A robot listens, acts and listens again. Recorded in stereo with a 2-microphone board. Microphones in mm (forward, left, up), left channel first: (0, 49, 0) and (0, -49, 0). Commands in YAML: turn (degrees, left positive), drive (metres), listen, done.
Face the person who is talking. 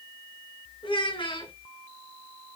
turn: 60
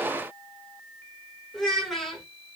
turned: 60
done: "Facing the child speaking."